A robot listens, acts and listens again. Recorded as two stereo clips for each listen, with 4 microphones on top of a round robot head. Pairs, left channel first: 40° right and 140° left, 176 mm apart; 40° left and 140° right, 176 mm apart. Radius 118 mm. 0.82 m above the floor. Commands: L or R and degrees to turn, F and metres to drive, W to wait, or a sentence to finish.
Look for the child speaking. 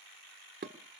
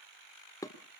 W
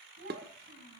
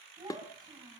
L150
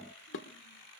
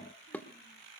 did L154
W
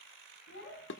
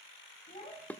R20
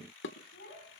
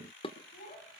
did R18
Found it: a child speaking, straight ahead.